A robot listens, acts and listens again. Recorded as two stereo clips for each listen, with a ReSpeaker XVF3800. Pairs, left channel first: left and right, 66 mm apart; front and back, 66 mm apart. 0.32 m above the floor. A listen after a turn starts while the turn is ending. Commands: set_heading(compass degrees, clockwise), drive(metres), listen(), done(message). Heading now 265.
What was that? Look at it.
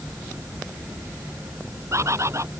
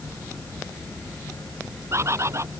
set_heading(40)
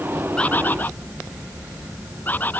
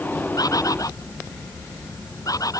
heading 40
set_heading(15)
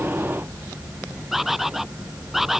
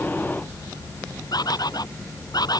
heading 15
done("Found it: a bird, straight ahead.")